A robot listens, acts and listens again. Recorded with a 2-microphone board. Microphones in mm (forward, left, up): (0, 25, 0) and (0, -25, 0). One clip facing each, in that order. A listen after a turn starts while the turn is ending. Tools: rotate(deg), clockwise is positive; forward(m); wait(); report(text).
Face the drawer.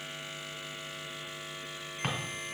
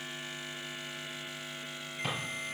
rotate(-50)
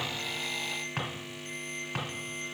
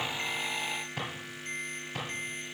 rotate(-75)
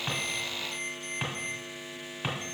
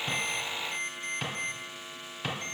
rotate(-15)
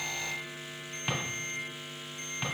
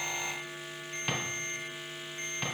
report("Found it: a drawer, straight ahead, 2 to 4 m away.")